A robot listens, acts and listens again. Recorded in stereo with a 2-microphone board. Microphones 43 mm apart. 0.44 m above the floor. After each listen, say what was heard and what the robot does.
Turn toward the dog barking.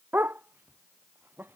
The dog barking: about 50° right or 130° right. Turn 50° right.
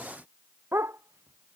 So it is at 75° right. Turn 75° right.
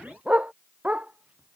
The dog barking is now 30° right. Turn 30° right.
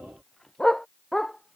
The dog barking is now 10° left. Turn 10° left.
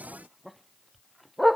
Facing the dog barking.